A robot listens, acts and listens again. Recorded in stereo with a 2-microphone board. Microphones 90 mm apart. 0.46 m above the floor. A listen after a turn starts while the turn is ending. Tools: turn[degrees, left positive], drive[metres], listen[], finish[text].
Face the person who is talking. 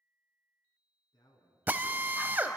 Thought: The man speaking: about 60° left or 120° left.
Action: turn[60]
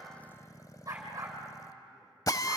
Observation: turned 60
Action: listen[]
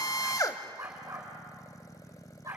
Action: listen[]
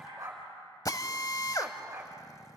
Action: finish[I heard a man speaking, but can't make it out now. It was about straight ahead or 60° left.]